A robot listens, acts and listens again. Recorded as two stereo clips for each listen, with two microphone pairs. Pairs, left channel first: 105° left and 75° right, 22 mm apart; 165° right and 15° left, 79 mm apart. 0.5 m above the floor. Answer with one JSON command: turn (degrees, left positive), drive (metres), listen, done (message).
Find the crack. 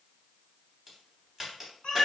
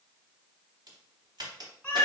{"done": "Found it: a crack, straight ahead, under 1 m away."}